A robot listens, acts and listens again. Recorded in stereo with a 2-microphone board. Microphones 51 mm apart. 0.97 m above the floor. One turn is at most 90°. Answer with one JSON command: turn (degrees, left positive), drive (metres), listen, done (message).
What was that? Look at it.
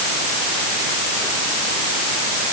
{"listen": true}
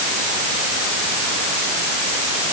{"listen": true}
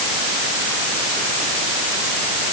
{"done": "I can't make out anything to turn to."}